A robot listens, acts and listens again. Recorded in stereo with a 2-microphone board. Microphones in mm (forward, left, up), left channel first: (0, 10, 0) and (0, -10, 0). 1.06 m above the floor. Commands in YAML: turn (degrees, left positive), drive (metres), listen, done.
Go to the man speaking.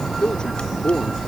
turn: 45
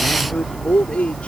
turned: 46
turn: 90
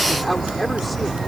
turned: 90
drive: 1.0
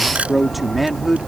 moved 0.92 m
drive: 1.0
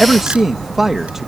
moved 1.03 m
turn: -20
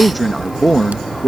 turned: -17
drive: 1.0
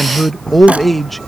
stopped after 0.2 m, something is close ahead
done: "Arrived at the man speaking, straight ahead."